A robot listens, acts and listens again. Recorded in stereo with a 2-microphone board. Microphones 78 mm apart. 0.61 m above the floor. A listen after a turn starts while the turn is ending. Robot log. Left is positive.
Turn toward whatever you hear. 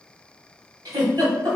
note: The giggle: about 65° right or 115° right.
cmd yaw -65
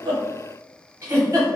note: So it is at 45° right.
cmd yaw -45
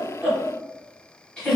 note: The giggle is now 15° left.
cmd yaw +15
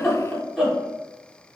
end: Found it: a giggle, straight ahead.